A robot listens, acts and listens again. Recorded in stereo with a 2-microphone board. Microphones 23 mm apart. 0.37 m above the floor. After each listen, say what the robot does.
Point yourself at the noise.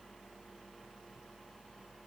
Keep listening.
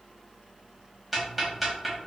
Turn 30° left.
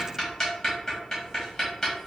Turn 155° left.
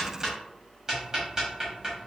Turn 25° right.
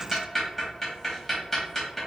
Turn 10° left.
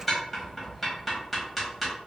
Found it: ticking, straight ahead.